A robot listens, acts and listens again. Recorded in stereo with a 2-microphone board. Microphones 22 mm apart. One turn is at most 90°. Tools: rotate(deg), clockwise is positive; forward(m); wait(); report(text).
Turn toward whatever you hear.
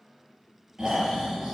rotate(30)
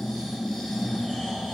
report("Found it: snoring, straight ahead.")